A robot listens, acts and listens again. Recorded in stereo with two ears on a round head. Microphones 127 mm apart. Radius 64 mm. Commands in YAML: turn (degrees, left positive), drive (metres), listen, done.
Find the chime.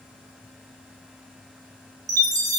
turn: -25
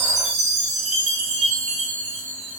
turn: -125
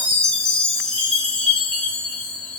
done: "Facing the chime."